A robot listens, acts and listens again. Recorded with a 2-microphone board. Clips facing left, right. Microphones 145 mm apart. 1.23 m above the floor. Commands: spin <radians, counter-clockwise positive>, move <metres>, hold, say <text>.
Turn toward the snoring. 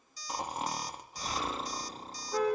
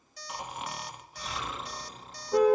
spin 0.61
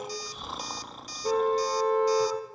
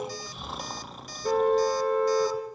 say Found it: snoring, straight ahead.